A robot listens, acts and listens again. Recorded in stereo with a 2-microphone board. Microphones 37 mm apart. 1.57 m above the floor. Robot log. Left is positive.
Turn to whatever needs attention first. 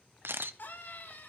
note: The scream: about 65° left or 115° left.
cmd yaw +65
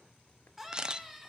end: Found it: a scream, straight ahead.